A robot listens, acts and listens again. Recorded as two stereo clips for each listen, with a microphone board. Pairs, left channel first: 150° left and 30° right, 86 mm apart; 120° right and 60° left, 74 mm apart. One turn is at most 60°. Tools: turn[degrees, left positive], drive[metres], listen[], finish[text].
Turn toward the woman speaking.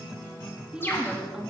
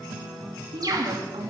Thought: The woman speaking: 55° left.
Action: turn[55]
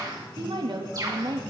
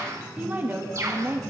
Action: finish[Found it: a woman speaking, straight ahead.]